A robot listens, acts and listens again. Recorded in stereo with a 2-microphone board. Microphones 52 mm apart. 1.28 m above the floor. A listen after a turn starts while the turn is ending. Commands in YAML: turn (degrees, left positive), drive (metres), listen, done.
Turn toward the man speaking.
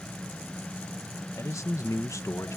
turn: 75
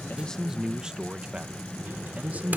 turn: -30
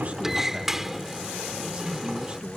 listen: true
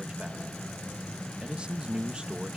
turn: -20
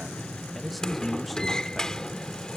done: "Found it: a man speaking, straight ahead."